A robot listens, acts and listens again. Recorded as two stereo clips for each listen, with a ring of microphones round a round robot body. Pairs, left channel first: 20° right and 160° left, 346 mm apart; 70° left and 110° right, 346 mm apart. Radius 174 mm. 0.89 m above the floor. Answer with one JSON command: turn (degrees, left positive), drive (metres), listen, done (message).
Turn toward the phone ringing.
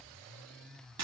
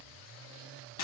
{"listen": true}
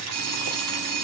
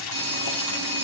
{"turn": -170}
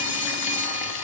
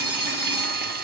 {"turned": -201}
{"turn": 30}
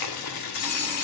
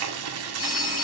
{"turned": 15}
{"turn": 15}
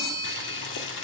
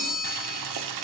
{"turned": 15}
{"done": "Facing the phone ringing."}